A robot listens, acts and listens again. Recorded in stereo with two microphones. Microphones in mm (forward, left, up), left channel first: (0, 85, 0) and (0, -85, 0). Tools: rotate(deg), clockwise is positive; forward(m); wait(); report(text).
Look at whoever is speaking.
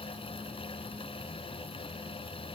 wait()
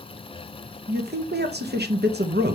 rotate(75)
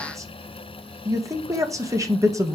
rotate(20)
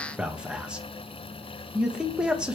report("Facing the man speaking.")